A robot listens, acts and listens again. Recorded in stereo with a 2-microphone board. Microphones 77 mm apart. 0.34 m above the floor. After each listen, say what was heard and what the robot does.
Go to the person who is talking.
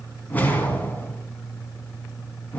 Keep listening.
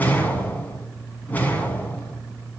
Keep listening.
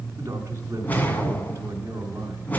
The man speaking: about 40° right or 140° right. Turn 40° right.
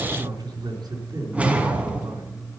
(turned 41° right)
So it is at 100° right. Turn 100° right.
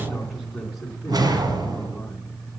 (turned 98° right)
Drive 1.0 m forward.
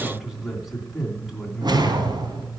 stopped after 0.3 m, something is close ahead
Blocked. The man speaking is further on, straight ahead.